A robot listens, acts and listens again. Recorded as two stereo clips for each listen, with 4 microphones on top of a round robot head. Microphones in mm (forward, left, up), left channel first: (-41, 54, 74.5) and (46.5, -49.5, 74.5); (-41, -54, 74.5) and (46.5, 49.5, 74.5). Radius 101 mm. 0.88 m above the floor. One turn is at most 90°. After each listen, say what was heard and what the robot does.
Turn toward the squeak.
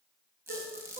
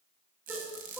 The squeak: 20° left. Turn 20° left.
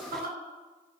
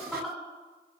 Keep listening.
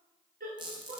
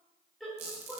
Facing the squeak, 1 to 2 m away.